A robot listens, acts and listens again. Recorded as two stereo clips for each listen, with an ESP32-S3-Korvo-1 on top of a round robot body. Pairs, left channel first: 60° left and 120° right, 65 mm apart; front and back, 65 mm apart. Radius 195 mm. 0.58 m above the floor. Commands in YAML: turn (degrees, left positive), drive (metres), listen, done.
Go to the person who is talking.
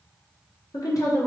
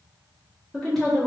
turn: 85
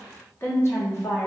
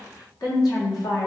drive: 1.0
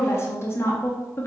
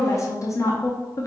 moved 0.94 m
turn: 20
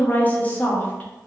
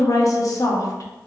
drive: 1.0
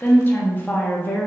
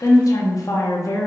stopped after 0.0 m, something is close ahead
done: "Arrived at the woman speaking, straight ahead."